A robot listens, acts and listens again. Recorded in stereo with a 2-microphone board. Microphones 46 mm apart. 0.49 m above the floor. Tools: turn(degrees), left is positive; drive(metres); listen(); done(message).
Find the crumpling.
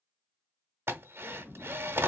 listen()
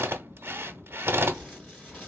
turn(degrees=30)
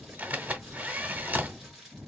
done("Facing the crumpling, 2 to 4 m away.")